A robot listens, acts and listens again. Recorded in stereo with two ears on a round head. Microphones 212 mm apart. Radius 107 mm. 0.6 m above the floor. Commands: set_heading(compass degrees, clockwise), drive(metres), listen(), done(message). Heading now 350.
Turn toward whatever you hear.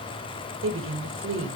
set_heading(45)
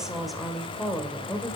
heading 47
set_heading(37)
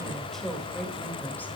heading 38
done("Facing the woman speaking.")